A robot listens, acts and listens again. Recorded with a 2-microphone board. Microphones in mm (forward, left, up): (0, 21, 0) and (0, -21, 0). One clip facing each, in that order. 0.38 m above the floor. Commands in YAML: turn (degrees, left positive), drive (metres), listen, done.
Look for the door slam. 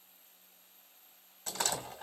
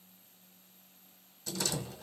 turn: 50
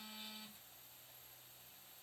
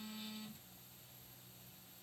listen: true
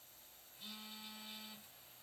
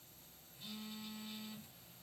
done: "I heard a door slam, but can't make it out now. It was about straight ahead or 80° left."